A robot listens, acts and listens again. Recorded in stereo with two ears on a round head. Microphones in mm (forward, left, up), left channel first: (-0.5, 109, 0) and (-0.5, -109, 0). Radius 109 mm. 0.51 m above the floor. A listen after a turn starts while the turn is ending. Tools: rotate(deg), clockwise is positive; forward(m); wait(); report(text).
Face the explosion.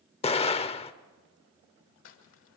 rotate(-25)
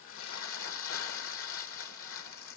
wait()
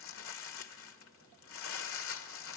report("I heard an explosion, but can't make it out now. It was about straight ahead or 130° left.")